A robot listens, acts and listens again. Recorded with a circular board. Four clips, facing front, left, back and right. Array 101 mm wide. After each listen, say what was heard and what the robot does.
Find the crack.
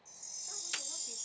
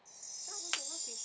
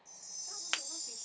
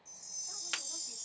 The crack: 160° left. Turn 160° left.
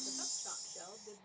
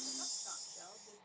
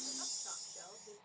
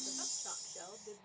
Facing where the crack came from. I can't hear it now.